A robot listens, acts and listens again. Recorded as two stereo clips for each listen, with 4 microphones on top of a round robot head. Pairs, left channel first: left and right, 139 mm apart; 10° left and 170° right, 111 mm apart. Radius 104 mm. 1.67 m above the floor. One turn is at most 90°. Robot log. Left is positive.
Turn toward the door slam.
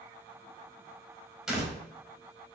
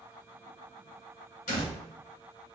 end: Facing the door slam.